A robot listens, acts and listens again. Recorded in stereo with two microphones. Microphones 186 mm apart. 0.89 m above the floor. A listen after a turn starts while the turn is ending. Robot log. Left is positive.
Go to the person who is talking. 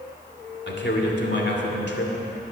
note: The man speaking: about 75° left or 105° left.
cmd yaw +75
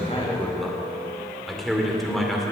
cmd fwd 1.0
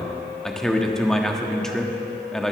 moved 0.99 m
cmd fwd 1.0
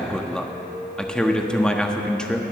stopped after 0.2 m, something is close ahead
end: I am next to the man speaking.